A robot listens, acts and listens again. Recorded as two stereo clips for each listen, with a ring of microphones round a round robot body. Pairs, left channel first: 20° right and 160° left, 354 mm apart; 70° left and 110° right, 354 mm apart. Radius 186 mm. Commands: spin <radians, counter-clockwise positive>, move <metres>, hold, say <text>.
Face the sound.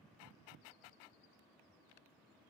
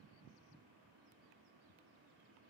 hold
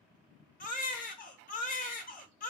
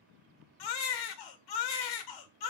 spin 0.79
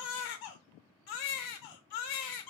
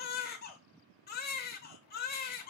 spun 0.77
say Facing the baby crying, under 1 m away.